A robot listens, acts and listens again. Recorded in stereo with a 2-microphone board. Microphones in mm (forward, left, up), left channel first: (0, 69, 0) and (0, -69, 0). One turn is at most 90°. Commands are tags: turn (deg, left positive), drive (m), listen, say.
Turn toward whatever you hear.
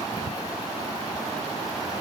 <listen/>
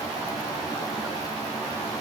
<listen/>
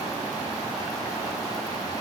<say>I can't make out anything to turn to.</say>